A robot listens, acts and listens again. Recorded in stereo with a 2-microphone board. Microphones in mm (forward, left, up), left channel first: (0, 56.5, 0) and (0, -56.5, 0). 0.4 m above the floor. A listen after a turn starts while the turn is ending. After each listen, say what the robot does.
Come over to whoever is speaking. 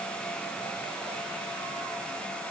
Keep listening.
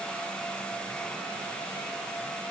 Keep listening.
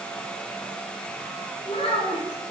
Turn 55° left.
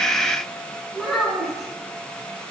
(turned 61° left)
Drive 1.0 m forward.
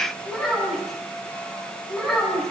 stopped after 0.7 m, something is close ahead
Blocked. The child speaking is further on, straight ahead.